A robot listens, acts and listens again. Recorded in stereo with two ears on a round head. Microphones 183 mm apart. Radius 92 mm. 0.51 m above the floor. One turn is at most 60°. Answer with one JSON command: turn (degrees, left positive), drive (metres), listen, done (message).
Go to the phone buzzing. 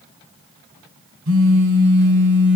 {"turn": -60}
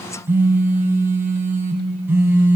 {"turn": -10}
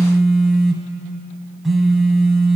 {"drive": 1.0}
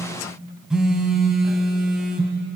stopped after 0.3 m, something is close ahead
{"done": "Blocked. The phone buzzing is further on, straight ahead."}